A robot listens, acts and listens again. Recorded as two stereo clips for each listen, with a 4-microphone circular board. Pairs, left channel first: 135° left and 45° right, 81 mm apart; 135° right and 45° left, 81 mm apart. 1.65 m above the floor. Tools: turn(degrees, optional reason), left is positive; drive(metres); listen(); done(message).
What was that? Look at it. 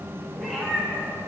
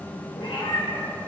turn(degrees=-140, reason="The cat meowing: 140° right.")
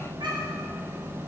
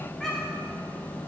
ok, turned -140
turn(degrees=-55, reason="The cat meowing is now 55° right.")
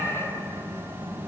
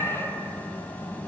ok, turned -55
turn(degrees=-35, reason="The cat meowing is now 35° right.")
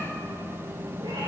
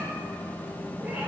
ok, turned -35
listen()
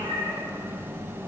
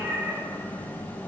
turn(degrees=-30, reason="The cat meowing is now 30° right.")
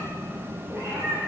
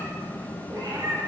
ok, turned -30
done("Found it: a cat meowing, straight ahead, 2 to 4 m away.")